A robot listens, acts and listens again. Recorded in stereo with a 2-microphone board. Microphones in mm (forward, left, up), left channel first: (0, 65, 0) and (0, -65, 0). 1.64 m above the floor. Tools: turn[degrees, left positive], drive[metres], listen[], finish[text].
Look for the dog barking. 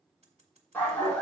Action: turn[30]
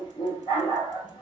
Thought: So it is at 145° left.
Action: turn[145]
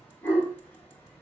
Thought: The dog barking is now 10° left.
Action: turn[10]
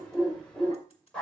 Action: finish[Found it: a dog barking, straight ahead, 2 to 4 m away.]